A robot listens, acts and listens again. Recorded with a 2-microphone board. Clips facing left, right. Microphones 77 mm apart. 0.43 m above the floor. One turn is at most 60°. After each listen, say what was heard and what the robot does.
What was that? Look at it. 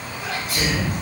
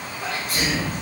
The sneeze: about 40° right or 140° right. Turn 40° right.
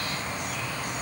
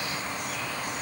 Keep listening.
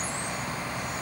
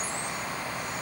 I heard a sneeze, but can't make it out now. It was about straight ahead or 100° right.